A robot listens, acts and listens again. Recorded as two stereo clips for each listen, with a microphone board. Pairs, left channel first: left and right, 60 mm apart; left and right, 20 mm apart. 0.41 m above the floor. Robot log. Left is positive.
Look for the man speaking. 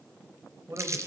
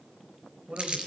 note: The man speaking: about 55° right or 125° right.
cmd yaw -55
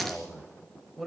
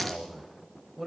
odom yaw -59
end: Found it: a man speaking, straight ahead.